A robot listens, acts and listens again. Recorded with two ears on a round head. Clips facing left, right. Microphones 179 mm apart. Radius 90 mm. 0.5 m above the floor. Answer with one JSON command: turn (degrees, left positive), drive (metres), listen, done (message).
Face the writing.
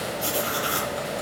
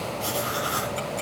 {"turn": 30}
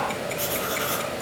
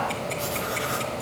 {"listen": true}
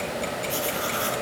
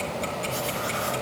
{"listen": true}
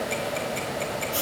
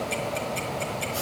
{"turn": 120}
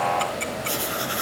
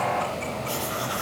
{"turn": 25}
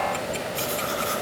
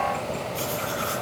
{"listen": true}
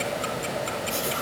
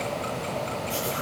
{"listen": true}
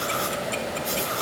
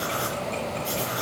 {"done": "Found it: writing, straight ahead."}